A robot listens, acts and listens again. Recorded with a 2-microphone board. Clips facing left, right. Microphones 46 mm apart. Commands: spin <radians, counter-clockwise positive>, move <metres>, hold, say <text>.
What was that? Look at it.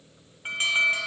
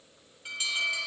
spin 0.79
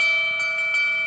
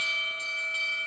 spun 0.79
spin 1.57
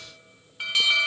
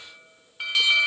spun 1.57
say Facing the alarm, 1 to 2 m away.